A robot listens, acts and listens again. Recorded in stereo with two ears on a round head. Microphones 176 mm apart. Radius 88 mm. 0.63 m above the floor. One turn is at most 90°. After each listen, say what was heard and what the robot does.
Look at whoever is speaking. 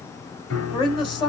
The woman speaking: about 25° left or 155° left. Turn 25° left.
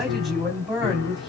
Found it: a woman speaking, straight ahead, over 4 m away.